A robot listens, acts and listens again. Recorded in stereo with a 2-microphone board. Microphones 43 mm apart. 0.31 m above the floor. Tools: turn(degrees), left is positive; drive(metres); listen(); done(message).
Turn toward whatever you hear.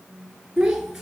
turn(degrees=-30)
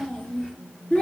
turn(degrees=30)
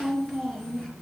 turn(degrees=15)
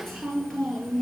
turn(degrees=10)
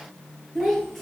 done("Facing the child speaking, over 4 m away.")